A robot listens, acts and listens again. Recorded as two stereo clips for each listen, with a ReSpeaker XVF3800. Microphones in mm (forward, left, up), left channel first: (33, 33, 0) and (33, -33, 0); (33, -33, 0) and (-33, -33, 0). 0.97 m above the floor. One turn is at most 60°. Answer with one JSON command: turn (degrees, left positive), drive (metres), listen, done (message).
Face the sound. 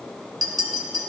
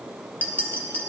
{"turn": -60}
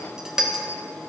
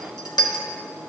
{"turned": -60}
{"turn": -10}
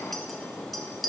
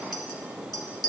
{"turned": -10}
{"done": "Facing the clink."}